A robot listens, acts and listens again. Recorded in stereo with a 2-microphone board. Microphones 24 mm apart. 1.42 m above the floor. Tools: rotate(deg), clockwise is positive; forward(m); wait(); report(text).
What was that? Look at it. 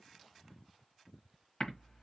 rotate(-45)
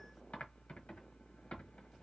rotate(-90)
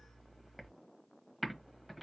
report("Found it: typing on a keyboard, straight ahead.")